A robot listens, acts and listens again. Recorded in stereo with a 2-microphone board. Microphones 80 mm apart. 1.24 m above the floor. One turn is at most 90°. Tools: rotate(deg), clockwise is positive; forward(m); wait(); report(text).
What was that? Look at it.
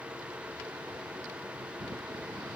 wait()
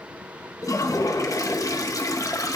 rotate(-45)
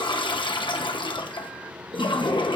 rotate(-90)
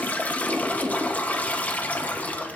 rotate(-20)
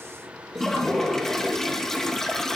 report("Facing the toilet flushing.")